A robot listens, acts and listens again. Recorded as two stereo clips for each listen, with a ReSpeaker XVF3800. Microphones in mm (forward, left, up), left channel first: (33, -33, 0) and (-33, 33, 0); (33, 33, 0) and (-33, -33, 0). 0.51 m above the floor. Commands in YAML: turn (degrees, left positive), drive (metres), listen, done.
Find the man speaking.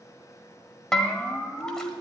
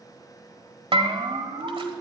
listen: true
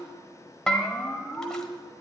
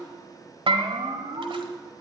listen: true
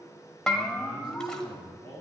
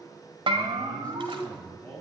turn: 115
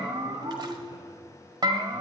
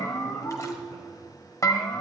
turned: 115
listen: true
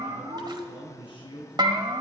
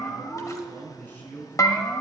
turn: -25
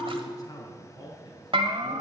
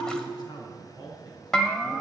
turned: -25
done: "Found it: a man speaking, straight ahead, over 4 m away."